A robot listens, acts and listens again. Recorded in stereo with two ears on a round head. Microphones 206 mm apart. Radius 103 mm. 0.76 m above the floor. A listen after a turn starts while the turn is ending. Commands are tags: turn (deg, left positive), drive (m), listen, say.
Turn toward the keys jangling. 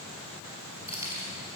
<turn deg="-15"/>
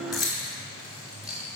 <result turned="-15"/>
<turn deg="-30"/>
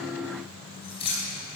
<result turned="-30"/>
<turn deg="25"/>
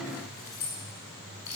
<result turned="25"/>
<turn deg="10"/>
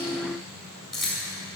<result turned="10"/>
<say>Found it: keys jangling, straight ahead.</say>